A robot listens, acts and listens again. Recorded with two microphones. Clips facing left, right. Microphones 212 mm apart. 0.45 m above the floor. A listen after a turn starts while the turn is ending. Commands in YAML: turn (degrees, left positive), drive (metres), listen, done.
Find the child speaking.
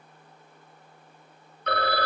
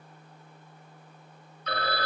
listen: true
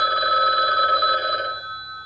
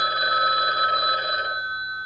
listen: true
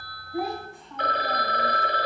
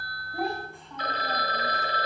turn: 30
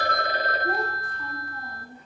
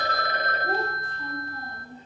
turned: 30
turn: -25
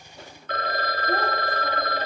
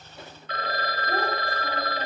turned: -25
listen: true
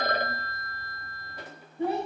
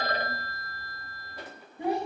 turn: -15
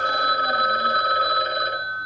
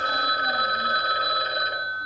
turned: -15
listen: true
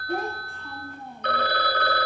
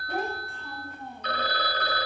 done: "Found it: a child speaking, straight ahead."